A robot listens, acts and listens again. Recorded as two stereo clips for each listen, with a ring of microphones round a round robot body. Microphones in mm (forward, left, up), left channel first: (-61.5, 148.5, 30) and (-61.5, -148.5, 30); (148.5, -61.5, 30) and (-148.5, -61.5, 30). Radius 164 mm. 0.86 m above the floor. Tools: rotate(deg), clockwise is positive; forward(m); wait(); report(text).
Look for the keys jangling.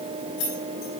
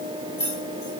rotate(-75)
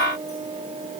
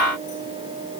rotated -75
wait()
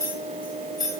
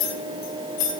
rotate(10)
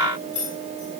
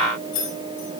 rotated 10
report("Facing the keys jangling.")